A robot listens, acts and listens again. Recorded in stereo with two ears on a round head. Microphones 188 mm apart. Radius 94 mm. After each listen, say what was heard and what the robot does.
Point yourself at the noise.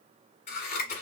The scissors: about 35° left or 145° left. Turn 35° left.
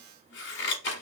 So it is at 100° left. Turn 100° left.
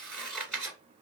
Found it: scissors, straight ahead, 1 to 2 m away.